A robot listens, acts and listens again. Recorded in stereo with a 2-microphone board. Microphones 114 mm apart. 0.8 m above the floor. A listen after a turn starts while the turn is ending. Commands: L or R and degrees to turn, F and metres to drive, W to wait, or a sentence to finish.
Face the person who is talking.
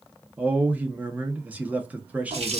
R30
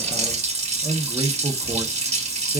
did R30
R135
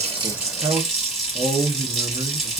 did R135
R50
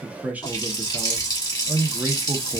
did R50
R15
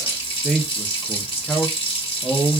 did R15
Facing the man speaking, under 1 m away.